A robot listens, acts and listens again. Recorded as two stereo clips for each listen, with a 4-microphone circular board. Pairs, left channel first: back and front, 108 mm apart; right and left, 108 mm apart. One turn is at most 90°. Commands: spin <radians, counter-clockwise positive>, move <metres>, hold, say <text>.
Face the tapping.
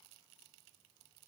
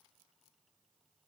hold
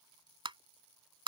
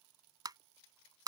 spin 0.70
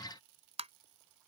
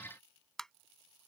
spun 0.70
say Facing the tapping.